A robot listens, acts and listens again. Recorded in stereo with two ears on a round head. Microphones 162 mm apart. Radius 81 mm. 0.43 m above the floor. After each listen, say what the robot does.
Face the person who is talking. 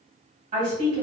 Turn 40° right.
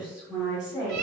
Found it: a woman speaking, straight ahead.